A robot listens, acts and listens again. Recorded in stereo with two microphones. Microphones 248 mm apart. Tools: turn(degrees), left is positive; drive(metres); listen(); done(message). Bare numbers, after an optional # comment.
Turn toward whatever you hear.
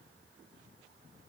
listen()
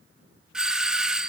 turn(-30)
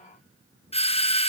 # So it is at 25° left.
turn(25)
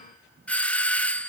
done("Facing the doorbell, under 1 m away.")